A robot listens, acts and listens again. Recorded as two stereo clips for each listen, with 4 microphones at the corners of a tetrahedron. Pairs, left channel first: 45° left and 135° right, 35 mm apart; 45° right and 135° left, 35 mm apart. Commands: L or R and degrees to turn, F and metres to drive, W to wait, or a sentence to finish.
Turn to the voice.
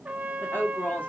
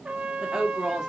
L65
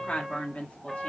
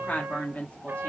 Facing the woman speaking, 1 to 2 m away.